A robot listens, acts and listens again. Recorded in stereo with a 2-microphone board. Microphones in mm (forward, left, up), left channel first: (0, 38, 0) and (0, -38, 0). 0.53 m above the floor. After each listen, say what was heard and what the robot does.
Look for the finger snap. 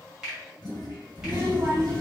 Turn 30° right.
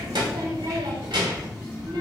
Keep listening.
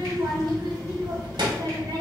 Keep listening.
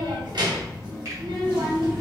I heard a finger snap, but can't make it out now. It was about 20° left or 140° right.